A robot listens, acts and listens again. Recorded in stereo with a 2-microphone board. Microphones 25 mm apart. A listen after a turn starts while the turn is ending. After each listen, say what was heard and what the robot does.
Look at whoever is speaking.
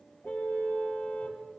Keep listening.
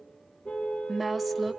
Turn 30° right.
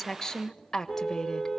So it is at 20° left. Turn 20° left.
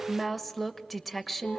Found it: a woman speaking, straight ahead, 1 to 2 m away.